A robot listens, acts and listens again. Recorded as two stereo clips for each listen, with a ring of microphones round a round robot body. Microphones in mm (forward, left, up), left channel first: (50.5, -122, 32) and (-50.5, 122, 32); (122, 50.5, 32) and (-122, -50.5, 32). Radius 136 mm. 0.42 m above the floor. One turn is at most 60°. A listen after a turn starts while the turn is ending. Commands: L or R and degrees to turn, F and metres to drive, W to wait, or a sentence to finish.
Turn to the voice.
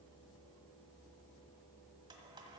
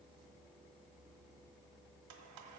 W
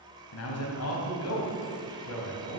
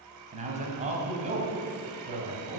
R60
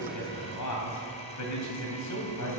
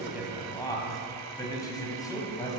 R55
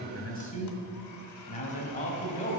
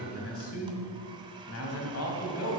Facing the man speaking, 2 to 4 m away.